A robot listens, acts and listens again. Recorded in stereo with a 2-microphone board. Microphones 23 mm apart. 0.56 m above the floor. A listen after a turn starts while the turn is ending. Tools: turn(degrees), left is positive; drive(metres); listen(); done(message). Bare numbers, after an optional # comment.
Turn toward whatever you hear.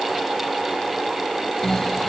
# The snoring: about 25° left or 155° left.
turn(25)
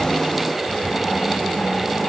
# So it is at 130° left.
turn(130)
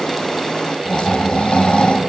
# The snoring is now 55° left.
turn(55)
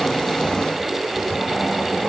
done("Facing the snoring.")